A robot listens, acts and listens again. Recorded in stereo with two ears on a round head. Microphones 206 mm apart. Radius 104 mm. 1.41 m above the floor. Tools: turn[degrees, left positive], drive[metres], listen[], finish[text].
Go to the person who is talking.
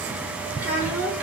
Action: turn[-30]
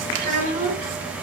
Thought: So it is at 140° right.
Action: turn[-140]
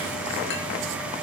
Action: listen[]
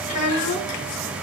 Thought: The child speaking is now 35° left.
Action: turn[35]
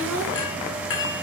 Action: drive[1.0]
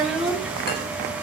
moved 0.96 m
Action: drive[1.0]
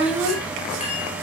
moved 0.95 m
Action: drive[1.0]
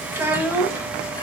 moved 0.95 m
Thought: The child speaking is now 10° right.
Action: turn[-10]
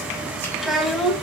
Action: drive[1.0]
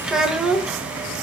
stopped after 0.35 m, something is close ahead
Action: finish[Arrived at the child speaking, straight ahead.]